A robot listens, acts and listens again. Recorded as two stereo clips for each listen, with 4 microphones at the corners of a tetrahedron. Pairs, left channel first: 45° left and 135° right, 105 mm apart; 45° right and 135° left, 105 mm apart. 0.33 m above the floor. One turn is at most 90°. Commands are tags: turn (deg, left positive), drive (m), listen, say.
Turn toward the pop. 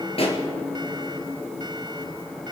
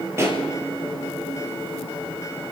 <turn deg="70"/>
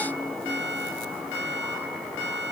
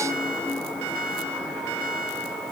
<say>I heard a pop from this way, but can't make it out now.</say>